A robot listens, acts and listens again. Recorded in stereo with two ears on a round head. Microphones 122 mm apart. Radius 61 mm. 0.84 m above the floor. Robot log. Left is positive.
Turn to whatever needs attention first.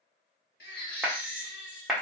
cmd yaw +90
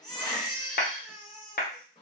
end: Facing the baby crying.